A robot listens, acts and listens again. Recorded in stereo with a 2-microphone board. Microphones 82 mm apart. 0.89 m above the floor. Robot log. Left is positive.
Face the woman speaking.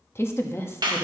note: The woman speaking: about 30° left or 150° left.
cmd yaw +30
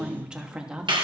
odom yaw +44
note: So it is at 10° right.
cmd yaw -10
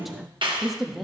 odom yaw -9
end: Found it: a woman speaking, straight ahead, under 1 m away.